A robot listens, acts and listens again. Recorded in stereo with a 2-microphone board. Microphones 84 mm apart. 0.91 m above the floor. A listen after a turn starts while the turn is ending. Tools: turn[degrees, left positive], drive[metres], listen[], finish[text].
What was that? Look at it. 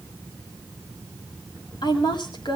Thought: The woman speaking: about 60° left or 120° left.
Action: turn[60]
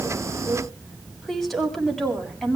Action: finish[Found it: a woman speaking, straight ahead.]